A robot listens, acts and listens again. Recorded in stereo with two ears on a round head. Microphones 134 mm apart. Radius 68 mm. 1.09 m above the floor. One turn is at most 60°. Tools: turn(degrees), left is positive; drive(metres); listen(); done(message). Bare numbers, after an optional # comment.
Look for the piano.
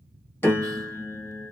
turn(30)
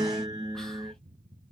# So it is at 15° right.
turn(-15)
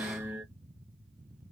done("Found it: a piano, straight ahead, under 1 m away.")